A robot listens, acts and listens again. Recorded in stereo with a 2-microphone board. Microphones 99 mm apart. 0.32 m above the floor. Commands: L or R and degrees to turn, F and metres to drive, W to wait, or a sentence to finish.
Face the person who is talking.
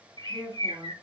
L30
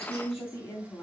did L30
L145
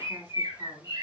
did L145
L10
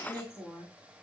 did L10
Facing the woman speaking, 2 to 4 m away.